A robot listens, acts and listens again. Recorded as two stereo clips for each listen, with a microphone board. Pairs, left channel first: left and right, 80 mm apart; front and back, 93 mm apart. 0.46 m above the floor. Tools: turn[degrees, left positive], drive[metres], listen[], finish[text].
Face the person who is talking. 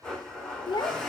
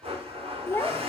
Thought: The child speaking: 65° left.
Action: turn[65]
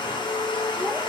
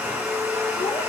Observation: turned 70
Action: listen[]
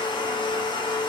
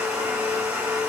Action: listen[]
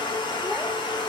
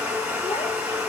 Action: finish[I heard a child speaking from this way, but can't make it out now.]